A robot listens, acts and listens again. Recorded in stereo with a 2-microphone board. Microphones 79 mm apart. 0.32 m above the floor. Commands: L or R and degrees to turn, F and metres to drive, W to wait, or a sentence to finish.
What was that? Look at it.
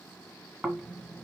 R30
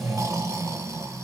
R140
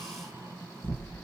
R35
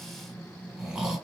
R10
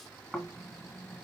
Facing the snoring, 1 to 2 m away.